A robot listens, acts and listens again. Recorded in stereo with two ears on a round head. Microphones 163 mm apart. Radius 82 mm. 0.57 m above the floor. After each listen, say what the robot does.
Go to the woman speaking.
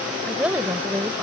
Turn 30° right.
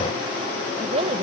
Turn 140° right.
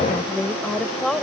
Drive 1.0 m forward.
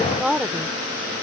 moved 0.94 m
Drive 1.0 m forward.
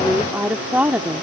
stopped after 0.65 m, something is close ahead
Turn 10° right.
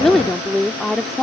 I am next to the woman speaking.